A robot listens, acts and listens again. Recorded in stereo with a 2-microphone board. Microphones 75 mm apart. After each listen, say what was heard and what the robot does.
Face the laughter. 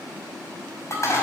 Keep listening.
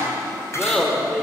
Turn 30° left.
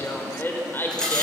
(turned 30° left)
So it is at 150° left. Turn 150° left.
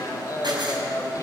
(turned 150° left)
The laughter is now 55° left. Turn 55° left.
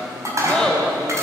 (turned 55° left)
The laughter is now 10° left. Turn 10° left.
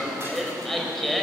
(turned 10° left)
Found it: laughter, straight ahead.